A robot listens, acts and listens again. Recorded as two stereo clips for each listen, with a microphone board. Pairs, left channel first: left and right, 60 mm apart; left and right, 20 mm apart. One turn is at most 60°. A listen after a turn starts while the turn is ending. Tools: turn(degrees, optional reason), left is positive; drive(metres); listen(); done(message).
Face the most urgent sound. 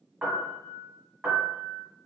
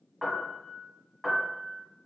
listen()
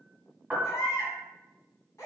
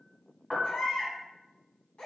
turn(degrees=60, reason="The baby crying: about 65° left or 115° left.")
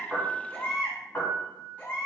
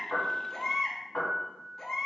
turn(degrees=30, reason="So it is at 30° left.")
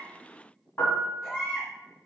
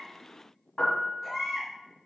done("Facing the baby crying.")